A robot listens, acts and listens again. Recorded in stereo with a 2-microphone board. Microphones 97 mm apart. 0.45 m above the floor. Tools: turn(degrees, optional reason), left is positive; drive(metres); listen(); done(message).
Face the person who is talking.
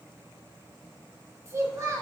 turn(degrees=-30, reason="The child speaking: about 30° right or 150° right.")
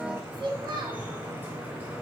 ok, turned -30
turn(degrees=-115, reason="So it is at 115° right.")
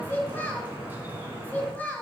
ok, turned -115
turn(degrees=20, reason="The child speaking is now 20° left.")
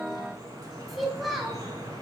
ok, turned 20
done("Facing the child speaking.")